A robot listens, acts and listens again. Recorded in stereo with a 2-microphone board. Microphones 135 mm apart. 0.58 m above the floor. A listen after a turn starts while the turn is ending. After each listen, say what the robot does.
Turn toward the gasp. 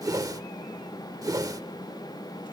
Keep listening.
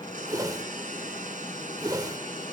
Keep listening.
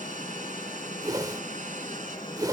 I can't make out a gasp to turn to.